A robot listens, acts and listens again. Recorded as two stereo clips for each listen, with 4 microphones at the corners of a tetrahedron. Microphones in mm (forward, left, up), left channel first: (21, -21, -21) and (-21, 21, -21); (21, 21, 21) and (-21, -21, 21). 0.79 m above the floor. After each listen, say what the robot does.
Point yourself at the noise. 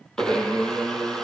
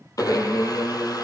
Turn 35° left.
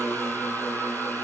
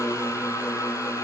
Turn 15° left.
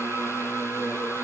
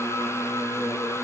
Facing the blender, 2 to 4 m away.